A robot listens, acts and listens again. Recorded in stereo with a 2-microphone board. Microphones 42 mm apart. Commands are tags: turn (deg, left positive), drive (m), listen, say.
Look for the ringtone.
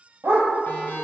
<turn deg="55"/>
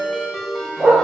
<say>Found it: a ringtone, straight ahead, 2 to 4 m away.</say>